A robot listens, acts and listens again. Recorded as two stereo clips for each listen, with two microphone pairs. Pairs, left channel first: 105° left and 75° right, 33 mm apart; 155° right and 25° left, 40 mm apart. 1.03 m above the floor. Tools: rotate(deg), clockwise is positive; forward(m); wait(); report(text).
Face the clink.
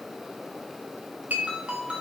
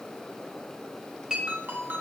rotate(45)
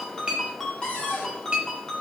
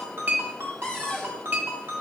report("Facing the clink, under 1 m away.")